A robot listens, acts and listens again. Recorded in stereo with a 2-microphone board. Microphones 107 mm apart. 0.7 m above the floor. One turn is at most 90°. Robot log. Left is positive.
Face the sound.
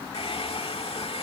note: The hair dryer: about 65° left or 115° left.
cmd yaw +65
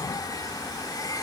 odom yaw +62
note: So it is at 40° left.
cmd yaw +40
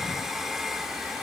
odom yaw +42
end: Facing the hair dryer.